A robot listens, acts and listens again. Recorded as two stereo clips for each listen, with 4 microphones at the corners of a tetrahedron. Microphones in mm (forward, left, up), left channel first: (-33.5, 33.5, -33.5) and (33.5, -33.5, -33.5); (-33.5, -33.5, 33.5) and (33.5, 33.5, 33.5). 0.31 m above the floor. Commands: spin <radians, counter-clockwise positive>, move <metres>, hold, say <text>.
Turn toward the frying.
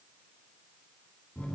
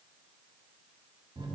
hold
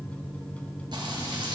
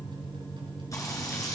spin -1.40
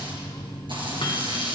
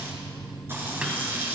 spin -0.35
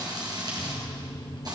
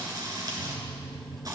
say Found it: frying, straight ahead.